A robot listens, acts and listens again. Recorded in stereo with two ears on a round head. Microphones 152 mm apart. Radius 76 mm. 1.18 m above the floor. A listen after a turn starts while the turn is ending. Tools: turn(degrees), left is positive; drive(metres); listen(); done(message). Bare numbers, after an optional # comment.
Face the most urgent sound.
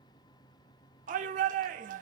# The shout: about 50° right or 130° right.
turn(-50)
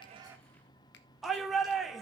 done("Facing the shout, 1 to 2 m away.")